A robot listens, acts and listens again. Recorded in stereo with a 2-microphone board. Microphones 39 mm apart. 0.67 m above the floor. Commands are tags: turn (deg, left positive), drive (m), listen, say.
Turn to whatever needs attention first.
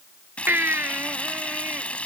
<turn deg="-65"/>
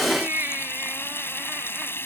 <turn deg="-50"/>
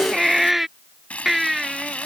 <say>Found it: a baby crying, straight ahead.</say>